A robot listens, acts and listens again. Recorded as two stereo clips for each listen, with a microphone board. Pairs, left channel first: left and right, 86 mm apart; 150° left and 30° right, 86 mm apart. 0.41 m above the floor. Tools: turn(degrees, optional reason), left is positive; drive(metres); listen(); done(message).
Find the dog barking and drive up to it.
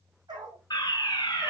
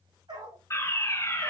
turn(degrees=-55, reason="The dog barking: 55° right.")
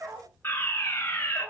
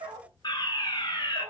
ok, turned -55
drive(metres=1.0)
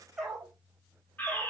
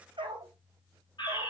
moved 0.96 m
drive(metres=1.0)
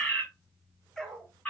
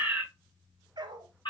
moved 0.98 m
drive(metres=1.0)
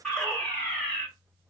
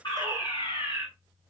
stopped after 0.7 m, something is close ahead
listen()
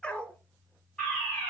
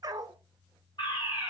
turn(degrees=15, reason="The dog barking is now 15° left.")
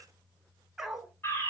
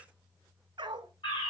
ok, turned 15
done("I am next to the dog barking.")